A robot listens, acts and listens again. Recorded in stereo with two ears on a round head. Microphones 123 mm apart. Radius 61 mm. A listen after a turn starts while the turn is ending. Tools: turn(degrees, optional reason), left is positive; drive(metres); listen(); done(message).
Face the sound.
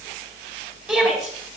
turn(degrees=-30)
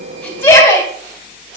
turn(degrees=20, reason="So it is at 20° left.")
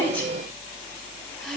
listen()
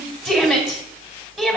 done("Found it: a shout, straight ahead.")